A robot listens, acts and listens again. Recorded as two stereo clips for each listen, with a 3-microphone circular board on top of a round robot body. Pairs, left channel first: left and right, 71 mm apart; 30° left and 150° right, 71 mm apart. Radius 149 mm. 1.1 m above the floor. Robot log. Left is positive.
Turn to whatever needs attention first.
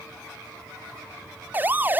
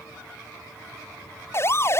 note: The siren: 25° right.
cmd yaw -25
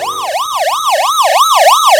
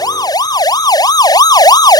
end: Facing the siren.